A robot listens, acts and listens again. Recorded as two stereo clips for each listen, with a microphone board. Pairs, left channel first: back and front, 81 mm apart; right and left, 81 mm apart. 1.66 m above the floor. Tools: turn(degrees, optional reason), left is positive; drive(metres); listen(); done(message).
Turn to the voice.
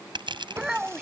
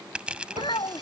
turn(degrees=-85, reason="The child speaking: 85° right.")
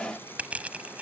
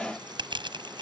listen()
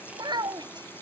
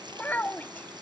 turn(degrees=-20, reason="The child speaking is now 20° right.")
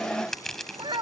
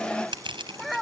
done("Facing the child speaking.")